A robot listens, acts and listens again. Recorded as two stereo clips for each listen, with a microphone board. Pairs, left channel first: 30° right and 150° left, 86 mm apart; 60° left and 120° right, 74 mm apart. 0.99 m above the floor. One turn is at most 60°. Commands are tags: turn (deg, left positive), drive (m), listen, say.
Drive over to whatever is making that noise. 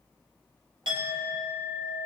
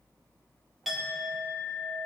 <turn deg="60"/>
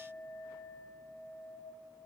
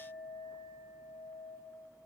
<turn deg="60"/>
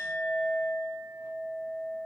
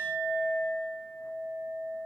<turn deg="50"/>
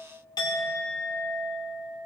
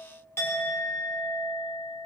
<drive m="1.0"/>
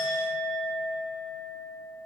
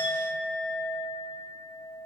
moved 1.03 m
<turn deg="10"/>
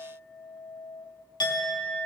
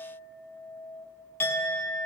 <drive m="1.0"/>
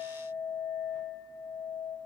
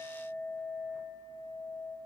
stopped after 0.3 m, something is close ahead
<say>I am next to the clink.</say>